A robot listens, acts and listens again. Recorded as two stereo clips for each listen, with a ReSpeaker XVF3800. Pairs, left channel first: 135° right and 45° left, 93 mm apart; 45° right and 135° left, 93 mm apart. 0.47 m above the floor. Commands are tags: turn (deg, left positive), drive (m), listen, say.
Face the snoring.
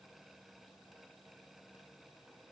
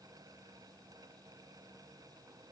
<listen/>
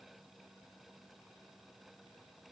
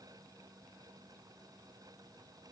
<listen/>
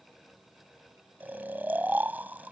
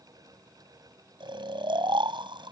<turn deg="115"/>
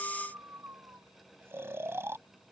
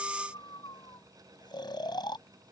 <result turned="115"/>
<turn deg="-15"/>
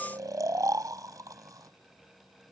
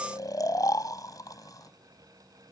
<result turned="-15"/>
<say>Facing the snoring.</say>